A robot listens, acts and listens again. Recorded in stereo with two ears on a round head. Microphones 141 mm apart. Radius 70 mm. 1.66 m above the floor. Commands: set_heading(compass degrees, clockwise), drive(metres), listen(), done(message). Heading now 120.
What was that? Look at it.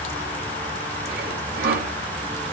set_heading(180)
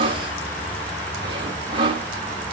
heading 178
set_heading(218)
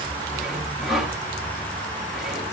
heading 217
done("Facing the sawing, 2 to 4 m away.")